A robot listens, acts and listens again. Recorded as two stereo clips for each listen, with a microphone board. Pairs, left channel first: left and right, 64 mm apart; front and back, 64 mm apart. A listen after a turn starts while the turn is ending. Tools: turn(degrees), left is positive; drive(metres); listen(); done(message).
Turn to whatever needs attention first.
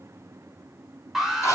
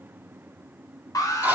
done("Facing the alarm.")